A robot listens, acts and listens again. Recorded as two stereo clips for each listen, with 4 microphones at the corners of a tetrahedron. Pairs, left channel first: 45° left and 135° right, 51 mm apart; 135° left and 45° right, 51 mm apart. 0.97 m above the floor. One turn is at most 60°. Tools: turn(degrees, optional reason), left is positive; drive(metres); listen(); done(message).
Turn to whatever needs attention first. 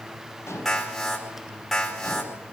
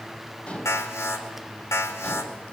turn(degrees=60, reason="The alarm: 125° left.")
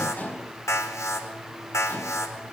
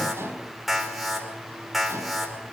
turn(degrees=45, reason="The alarm is now 45° left.")
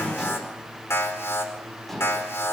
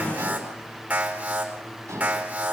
turn(degrees=15, reason="The alarm is now 15° left.")
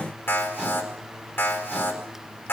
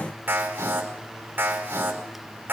done("Facing the alarm, over 4 m away.")